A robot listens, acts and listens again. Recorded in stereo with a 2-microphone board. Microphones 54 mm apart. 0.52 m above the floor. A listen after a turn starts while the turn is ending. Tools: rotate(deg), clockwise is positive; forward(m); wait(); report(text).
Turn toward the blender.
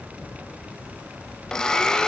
rotate(-30)
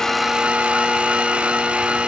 rotate(20)
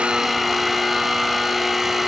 report("Found it: a blender, straight ahead, 1 to 2 m away.")